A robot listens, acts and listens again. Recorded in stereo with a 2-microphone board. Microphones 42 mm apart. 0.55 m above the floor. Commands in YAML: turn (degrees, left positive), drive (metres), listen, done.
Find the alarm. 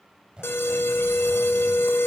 turn: 65
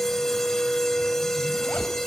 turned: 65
turn: 10
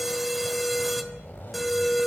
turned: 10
done: "Facing the alarm."